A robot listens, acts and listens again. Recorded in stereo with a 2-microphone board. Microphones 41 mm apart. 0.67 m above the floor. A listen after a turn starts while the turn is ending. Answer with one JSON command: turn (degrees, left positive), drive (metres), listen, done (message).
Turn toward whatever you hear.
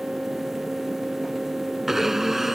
{"turn": -30}
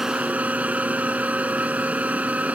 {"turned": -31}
{"turn": -145}
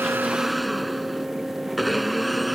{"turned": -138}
{"done": "Facing the blender."}